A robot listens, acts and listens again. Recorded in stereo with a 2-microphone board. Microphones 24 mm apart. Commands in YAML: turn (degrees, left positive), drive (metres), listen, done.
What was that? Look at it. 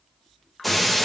turn: 30
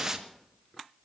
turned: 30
turn: -25
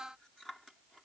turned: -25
done: "Facing where the breaking glass came from. I can't hear it now."